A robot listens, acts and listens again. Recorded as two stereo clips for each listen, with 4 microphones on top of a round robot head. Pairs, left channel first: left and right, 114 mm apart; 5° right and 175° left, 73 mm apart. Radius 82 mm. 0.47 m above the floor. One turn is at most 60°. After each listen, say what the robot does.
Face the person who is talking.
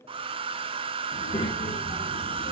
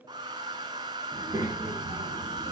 Turn 60° left.
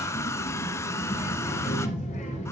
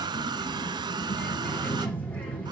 Turn 60° left.
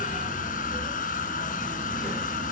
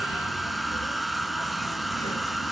Keep listening.
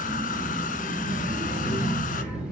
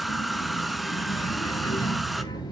Facing the child speaking, over 4 m away.